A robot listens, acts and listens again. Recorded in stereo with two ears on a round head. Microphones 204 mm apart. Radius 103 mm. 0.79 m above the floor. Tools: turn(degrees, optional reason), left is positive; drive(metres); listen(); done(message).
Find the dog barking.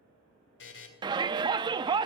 listen()
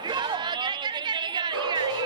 turn(degrees=-90)
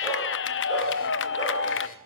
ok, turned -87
listen()
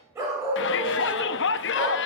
turn(degrees=-15, reason="The dog barking is now 15° right.")
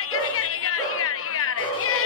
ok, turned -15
done("Facing the dog barking, over 4 m away.")